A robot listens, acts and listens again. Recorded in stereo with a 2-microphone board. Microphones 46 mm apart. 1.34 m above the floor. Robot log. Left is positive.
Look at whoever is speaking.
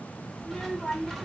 note: The child speaking: about 25° left or 155° left.
cmd yaw +25
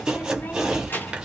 note: So it is at 130° left.
cmd yaw +130
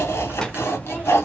cmd idle
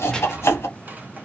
cmd idle
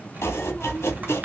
end: I heard a child speaking from this way, but can't make it out now.